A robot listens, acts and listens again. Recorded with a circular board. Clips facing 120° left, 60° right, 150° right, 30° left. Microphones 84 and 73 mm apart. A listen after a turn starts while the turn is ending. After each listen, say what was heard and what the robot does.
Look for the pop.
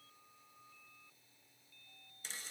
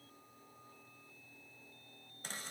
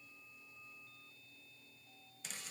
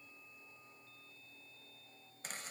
Keep listening.
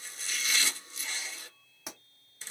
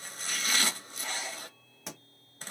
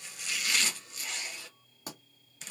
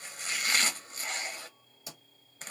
The pop: 155° right. Turn 155° right.
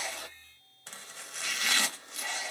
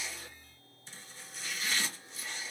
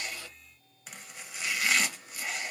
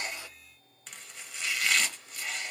I heard a pop from this way, but can't make it out now.